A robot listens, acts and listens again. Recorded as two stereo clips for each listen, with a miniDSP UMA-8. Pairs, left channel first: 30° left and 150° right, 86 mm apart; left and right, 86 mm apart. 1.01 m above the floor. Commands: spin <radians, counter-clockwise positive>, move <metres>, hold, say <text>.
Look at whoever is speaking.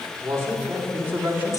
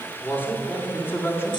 spin 2.53
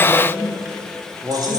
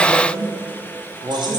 spin -1.92
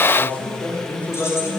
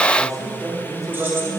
spin -0.79
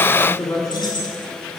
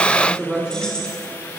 spin -0.17
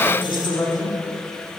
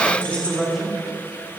say Facing the man speaking, 2 to 4 m away.